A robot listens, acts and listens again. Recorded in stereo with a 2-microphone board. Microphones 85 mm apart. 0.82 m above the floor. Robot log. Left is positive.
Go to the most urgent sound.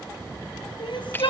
note: The crying: about 70° left or 110° left.
cmd yaw +70
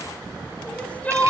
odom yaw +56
note: So it is at 15° left.
cmd yaw +15
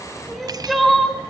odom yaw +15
cmd fwd 1.0
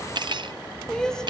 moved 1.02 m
note: The crying is now 10° left.
cmd yaw +10
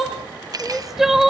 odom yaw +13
cmd fwd 1.0
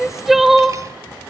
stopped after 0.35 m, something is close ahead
end: Arrived at the crying, straight ahead.